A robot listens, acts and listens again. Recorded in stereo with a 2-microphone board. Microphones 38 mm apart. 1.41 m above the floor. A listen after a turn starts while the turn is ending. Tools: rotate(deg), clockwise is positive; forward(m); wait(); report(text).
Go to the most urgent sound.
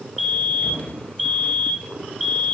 rotate(-30)
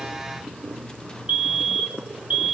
rotate(25)
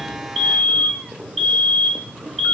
rotate(-10)
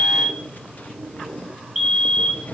forward(1.0)
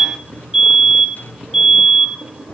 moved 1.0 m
forward(1.0)
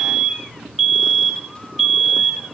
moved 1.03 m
forward(1.0)
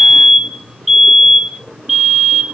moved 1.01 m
forward(1.0)
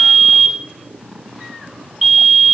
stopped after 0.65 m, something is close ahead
report("Arrived at the fire alarm, straight ahead.")